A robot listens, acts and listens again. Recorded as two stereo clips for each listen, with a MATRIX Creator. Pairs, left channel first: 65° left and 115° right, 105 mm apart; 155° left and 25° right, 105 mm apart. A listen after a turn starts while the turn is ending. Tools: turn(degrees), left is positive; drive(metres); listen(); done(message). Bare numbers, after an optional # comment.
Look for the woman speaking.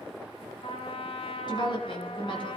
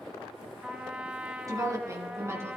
# The woman speaking: 40° left.
turn(40)
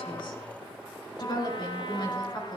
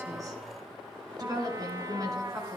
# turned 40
# The woman speaking is now 30° left.
turn(30)
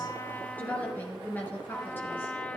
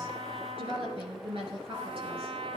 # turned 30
done("Facing the woman speaking, over 4 m away.")